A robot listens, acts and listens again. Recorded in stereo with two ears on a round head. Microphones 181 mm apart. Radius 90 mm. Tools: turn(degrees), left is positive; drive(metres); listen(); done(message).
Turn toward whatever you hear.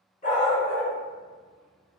turn(degrees=30)
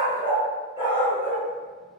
turn(degrees=-15)
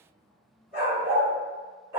turn(degrees=-10)
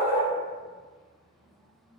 done("Facing the dog barking, 2 to 4 m away.")